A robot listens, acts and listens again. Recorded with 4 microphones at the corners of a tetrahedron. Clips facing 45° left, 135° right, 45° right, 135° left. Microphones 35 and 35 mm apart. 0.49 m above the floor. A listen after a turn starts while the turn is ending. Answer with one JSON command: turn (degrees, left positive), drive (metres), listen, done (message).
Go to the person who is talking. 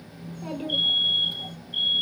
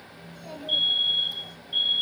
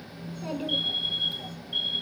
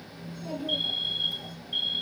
{"drive": 1.0}
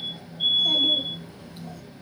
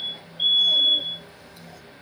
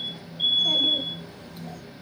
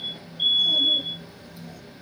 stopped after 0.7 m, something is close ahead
{"turn": -10}
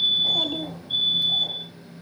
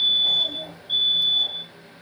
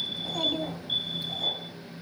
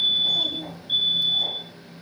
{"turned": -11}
{"done": "Something is in my way. I am facing the child speaking but have not reached it."}